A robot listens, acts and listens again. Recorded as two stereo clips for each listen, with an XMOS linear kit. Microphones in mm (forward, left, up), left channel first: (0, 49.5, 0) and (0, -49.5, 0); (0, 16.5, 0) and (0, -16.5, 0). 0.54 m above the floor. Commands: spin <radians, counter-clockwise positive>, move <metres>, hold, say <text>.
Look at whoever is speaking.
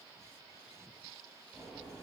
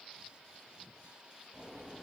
hold
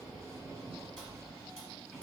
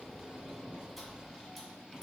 hold
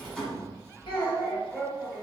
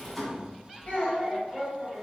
spin 0.87
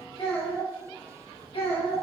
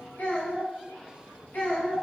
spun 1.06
spin 1.48
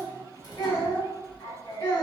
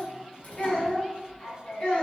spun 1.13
spin 0.52
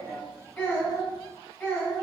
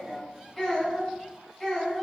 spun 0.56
say Facing the child speaking.